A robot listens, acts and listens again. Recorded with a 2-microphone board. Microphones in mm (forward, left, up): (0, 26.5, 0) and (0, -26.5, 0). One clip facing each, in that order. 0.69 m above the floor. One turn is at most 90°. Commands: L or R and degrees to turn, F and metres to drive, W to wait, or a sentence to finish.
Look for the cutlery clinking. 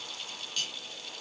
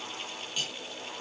R20
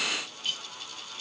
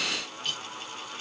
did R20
Found it: cutlery clinking, straight ahead, 2 to 4 m away.